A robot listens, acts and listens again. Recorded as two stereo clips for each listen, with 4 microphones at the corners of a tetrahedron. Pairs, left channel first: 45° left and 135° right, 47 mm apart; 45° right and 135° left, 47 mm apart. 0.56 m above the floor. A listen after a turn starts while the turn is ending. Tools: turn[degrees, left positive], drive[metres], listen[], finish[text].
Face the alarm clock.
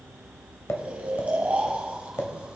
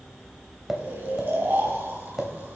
Action: listen[]
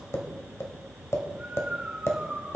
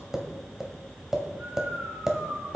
Action: listen[]
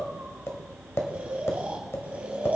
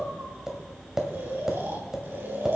Action: finish[I can't make out an alarm clock to turn to.]